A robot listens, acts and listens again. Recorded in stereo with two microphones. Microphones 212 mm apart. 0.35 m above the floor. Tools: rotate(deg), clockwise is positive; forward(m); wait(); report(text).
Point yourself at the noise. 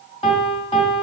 rotate(-30)
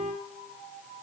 report("Facing the piano.")